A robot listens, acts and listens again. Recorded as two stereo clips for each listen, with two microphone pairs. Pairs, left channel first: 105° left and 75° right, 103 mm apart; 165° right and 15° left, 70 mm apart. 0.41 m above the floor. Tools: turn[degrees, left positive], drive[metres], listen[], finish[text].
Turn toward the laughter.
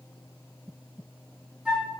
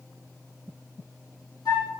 Action: listen[]
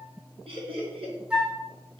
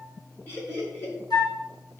Thought: The laughter: 105° right.
Action: turn[-105]
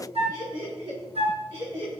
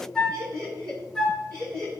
Thought: The laughter is now 30° right.
Action: turn[-30]
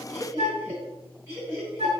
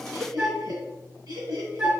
Thought: The laughter is now 10° right.
Action: turn[-10]
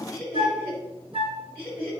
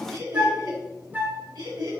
Action: finish[Facing the laughter, over 4 m away.]